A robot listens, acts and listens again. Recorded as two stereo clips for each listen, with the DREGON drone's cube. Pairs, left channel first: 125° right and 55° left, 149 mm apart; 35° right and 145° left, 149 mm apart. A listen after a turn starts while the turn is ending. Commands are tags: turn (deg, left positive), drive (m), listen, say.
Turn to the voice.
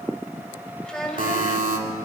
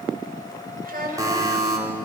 <turn deg="150"/>
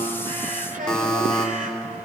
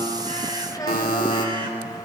<turn deg="30"/>
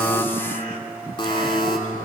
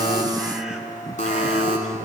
<listen/>
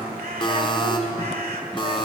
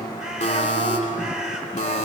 <listen/>
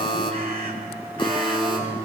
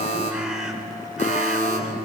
<say>I heard a child speaking from this way, but can't make it out now.</say>